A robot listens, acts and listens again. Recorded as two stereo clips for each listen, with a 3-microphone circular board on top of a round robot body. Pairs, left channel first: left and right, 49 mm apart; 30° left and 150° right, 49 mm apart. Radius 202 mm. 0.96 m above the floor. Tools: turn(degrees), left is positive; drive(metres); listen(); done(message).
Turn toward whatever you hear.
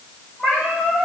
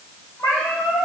turn(degrees=25)
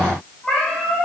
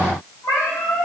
turn(degrees=15)
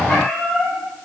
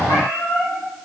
turn(degrees=15)
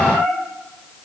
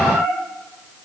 turn(degrees=10)
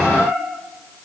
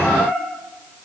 turn(degrees=10)
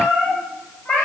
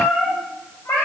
turn(degrees=10)
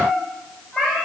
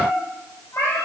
done("Facing the cat meowing.")